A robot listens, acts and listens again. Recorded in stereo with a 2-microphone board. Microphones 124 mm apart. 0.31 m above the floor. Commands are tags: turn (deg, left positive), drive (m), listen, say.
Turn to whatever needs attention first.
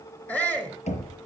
<turn deg="30"/>
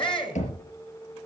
<turn deg="135"/>
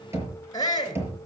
<turn deg="35"/>
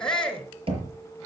<say>Found it: a shout, straight ahead, 2 to 4 m away.</say>